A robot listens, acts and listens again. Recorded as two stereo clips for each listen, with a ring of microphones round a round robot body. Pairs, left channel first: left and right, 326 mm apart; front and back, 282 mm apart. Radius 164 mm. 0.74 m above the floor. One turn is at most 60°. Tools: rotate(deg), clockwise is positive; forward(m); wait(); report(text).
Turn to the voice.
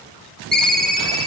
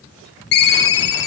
wait()
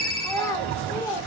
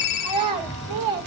rotate(-60)
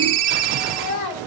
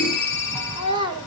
rotate(-60)
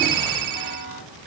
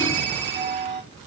rotate(-45)
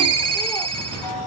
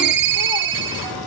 wait()
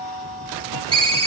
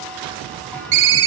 report("Facing where the child speaking came from. I can't hear it now.")